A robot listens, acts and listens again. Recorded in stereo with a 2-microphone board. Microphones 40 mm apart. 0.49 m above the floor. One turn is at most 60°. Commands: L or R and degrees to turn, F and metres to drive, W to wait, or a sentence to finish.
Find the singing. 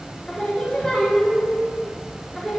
L30
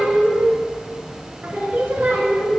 R55
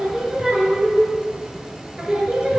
R25
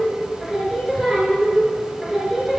Facing the singing, 1 to 2 m away.